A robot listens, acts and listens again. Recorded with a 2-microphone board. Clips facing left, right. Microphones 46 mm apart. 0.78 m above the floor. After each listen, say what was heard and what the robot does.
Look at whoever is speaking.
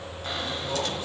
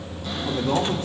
The man speaking: about 60° right or 120° right. Turn 60° right.
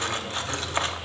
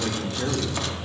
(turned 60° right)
So it is at 55° right. Turn 55° right.
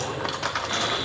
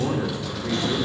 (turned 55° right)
Found it: a man speaking, straight ahead.